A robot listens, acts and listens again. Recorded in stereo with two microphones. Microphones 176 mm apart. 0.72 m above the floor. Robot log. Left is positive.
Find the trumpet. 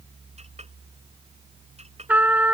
cmd yaw -30
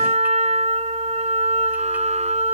note: So it is at 140° right.
cmd yaw -140
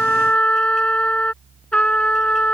end: Facing the trumpet.